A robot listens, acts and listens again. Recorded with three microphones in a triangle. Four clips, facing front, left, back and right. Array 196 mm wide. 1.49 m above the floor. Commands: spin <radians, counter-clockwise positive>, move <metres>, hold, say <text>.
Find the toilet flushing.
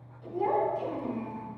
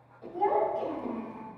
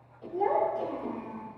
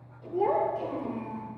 hold
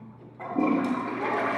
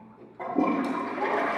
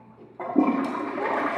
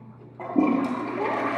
spin -2.88
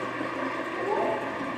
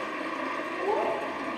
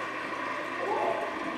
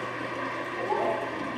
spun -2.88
spin 0.26
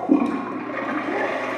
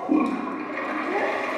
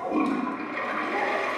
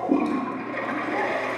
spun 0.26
say Found it: a toilet flushing, straight ahead.